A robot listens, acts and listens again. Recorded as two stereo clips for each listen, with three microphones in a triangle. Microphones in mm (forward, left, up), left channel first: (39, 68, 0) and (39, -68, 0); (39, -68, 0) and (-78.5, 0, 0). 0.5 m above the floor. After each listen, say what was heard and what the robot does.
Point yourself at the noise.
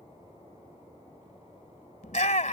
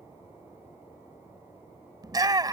The shout: 95° left. Turn 95° left.
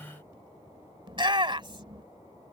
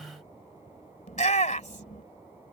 The shout is now 40° right. Turn 40° right.
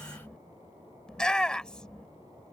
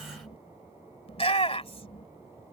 Found it: a shout, straight ahead.